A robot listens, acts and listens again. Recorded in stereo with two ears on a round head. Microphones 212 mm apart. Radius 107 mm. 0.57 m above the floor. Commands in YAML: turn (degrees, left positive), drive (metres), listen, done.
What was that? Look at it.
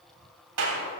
turn: -70
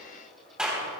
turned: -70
done: "Found it: a clap, straight ahead, 2 to 4 m away."